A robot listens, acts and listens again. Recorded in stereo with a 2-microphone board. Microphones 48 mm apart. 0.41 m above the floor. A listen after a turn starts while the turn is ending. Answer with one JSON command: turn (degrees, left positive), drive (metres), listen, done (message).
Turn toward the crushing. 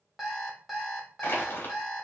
{"turn": 45}
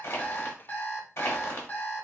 {"turn": 80}
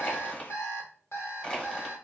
{"turn": 20}
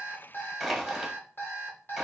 {"done": "Found it: crushing, straight ahead, under 1 m away."}